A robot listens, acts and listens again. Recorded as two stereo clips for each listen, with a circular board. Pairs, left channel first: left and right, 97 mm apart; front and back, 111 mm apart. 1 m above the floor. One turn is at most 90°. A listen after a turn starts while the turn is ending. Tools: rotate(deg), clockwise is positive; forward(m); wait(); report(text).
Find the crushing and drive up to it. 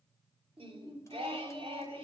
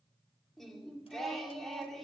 wait()
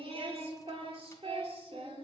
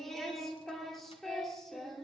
wait()
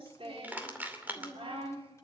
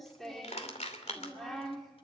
rotate(20)
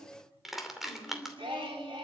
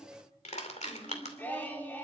forward(1.0)
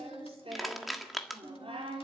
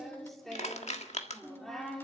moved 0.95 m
forward(1.0)
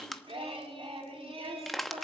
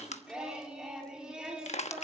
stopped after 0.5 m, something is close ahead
report("I am next to the crushing.")